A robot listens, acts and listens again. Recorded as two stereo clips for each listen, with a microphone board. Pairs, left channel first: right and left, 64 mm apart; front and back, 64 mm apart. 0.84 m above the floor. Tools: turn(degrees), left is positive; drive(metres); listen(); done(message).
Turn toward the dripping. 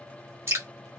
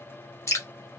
turn(degrees=40)
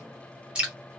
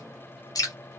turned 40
turn(degrees=15)
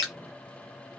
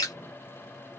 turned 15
done("Facing the dripping.")